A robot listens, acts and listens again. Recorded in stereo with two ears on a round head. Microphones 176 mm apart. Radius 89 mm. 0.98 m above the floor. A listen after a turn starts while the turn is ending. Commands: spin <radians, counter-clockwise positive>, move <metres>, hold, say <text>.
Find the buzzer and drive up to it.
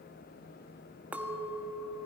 hold
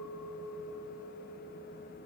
hold
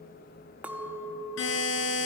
spin 1.57
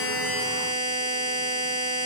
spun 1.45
spin 0.26
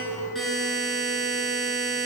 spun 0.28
move 1.0
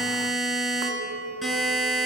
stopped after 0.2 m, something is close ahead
say Something is in my way. I am facing the buzzer but have not reached it.